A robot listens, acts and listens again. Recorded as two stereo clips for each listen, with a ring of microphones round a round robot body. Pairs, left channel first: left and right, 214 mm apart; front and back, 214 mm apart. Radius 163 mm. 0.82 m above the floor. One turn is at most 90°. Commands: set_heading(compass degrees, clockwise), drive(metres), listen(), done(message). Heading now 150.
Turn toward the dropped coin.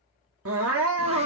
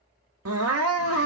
listen()
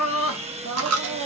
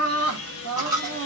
set_heading(240)
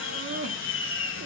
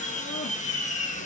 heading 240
set_heading(250)
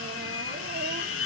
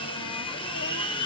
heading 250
done("Facing where the dropped coin came from. I can't hear it now.")